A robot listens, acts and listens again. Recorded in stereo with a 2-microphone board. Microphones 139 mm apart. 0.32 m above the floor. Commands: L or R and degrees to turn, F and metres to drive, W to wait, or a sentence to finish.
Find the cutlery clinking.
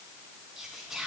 W
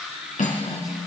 L70
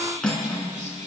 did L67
Facing the cutlery clinking.